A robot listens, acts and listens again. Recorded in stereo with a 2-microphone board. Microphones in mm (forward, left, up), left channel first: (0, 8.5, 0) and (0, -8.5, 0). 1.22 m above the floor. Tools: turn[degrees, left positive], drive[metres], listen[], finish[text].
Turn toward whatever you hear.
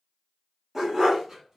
Thought: The dog barking: about 25° right or 155° right.
Action: turn[-25]
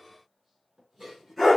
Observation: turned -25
Action: finish[Found it: a dog barking, straight ahead, 2 to 4 m away.]